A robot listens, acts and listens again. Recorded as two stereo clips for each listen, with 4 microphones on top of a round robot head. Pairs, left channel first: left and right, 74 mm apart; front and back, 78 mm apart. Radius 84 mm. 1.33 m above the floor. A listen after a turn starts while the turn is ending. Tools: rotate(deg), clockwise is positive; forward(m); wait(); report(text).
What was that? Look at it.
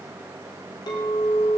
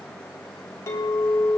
rotate(-50)
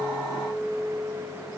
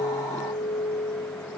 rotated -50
rotate(-10)
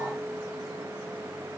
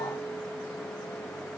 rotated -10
report("Facing the clink.")